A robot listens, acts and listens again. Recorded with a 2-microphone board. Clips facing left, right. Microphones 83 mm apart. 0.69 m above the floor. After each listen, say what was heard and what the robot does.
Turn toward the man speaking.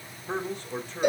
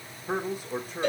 Turn 30° right.
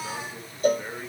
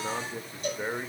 So it is at 155° right. Turn 155° right.
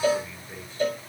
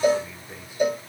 The man speaking is now 10° right. Turn 10° right.
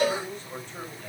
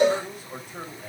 The man speaking is now 10° right. Turn 10° right.
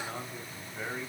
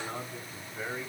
Found it: a man speaking, straight ahead.